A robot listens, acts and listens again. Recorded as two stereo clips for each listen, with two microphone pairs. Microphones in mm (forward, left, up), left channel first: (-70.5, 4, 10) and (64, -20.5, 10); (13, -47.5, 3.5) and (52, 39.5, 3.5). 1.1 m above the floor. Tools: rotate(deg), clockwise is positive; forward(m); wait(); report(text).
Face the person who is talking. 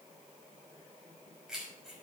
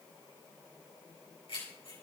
wait()
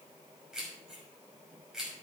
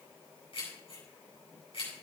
wait()
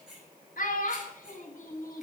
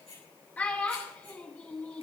rotate(-175)
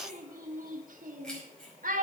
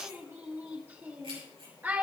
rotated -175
report("Facing the child speaking, 1 to 2 m away.")